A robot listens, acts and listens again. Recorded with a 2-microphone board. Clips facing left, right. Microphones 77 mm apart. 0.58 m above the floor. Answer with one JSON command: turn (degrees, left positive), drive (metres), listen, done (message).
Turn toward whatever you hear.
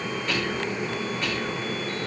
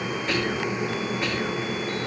{"turn": -25}
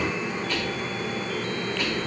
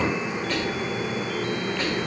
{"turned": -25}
{"turn": -130}
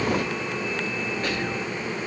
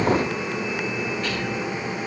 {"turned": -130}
{"turn": 35}
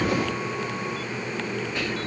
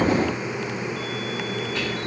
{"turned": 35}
{"turn": 20}
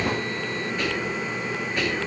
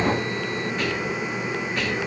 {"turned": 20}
{"done": "Found it: whispering, straight ahead."}